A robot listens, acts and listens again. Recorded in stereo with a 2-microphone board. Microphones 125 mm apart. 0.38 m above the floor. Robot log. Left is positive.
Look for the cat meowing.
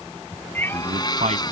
note: The cat meowing: about 15° left or 165° left.
cmd yaw +15
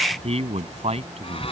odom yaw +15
cmd idle
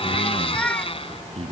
cmd yaw +30
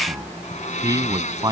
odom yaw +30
cmd idle
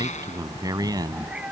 note: So it is at 10° right.
cmd yaw -10
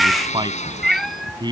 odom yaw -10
end: Found it: a cat meowing, straight ahead.